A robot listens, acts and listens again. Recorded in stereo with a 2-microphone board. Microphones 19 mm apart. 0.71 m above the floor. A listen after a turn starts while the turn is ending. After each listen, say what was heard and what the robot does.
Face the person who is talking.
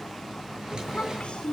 Turn 90° left.
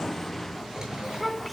Found it: a child speaking, straight ahead, over 4 m away.